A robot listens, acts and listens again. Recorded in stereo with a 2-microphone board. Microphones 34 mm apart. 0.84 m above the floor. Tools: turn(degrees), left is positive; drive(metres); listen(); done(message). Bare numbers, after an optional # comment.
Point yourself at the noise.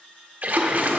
# The splash: about 50° right or 130° right.
turn(-50)
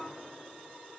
listen()
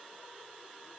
done("I heard a splash, but can't make it out now. It was about straight ahead or 80° right.")